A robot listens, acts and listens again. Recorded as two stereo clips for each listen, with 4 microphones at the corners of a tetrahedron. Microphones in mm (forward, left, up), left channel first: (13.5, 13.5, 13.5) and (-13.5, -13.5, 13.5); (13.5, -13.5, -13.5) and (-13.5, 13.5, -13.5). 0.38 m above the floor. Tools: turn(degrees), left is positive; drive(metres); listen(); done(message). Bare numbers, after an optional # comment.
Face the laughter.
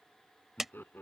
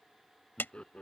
# The laughter: 20° left.
turn(20)
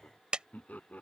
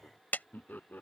done("Found it: laughter, straight ahead.")